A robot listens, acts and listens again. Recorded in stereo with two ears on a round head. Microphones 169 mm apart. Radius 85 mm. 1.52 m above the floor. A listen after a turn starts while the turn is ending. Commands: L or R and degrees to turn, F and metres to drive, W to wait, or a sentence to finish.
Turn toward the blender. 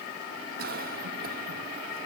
W
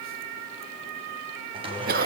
R30
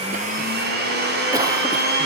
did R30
R120
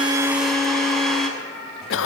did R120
Found it: a blender, straight ahead.